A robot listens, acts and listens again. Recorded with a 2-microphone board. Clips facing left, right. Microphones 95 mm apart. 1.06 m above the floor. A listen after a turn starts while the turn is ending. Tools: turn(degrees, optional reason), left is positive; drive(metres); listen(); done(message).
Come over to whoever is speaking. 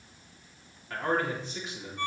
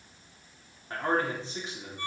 turn(degrees=-30, reason="The man speaking: about 30° right or 150° right.")
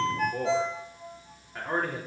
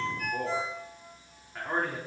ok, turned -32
drive(metres=1.0)
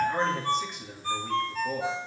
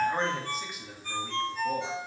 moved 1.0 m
drive(metres=1.0)
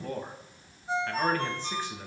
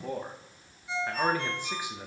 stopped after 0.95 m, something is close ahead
turn(degrees=-15, reason="The man speaking is now 15° right.")
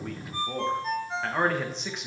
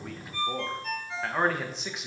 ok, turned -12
done("Arrived at the man speaking, straight ahead.")